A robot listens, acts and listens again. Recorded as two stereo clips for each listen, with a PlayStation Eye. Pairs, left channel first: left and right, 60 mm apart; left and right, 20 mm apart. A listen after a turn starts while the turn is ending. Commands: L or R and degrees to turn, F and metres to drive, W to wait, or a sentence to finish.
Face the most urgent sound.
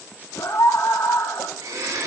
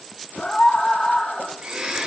L70
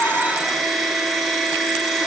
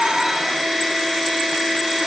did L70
W
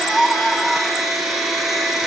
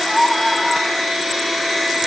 Found it: a scream, straight ahead.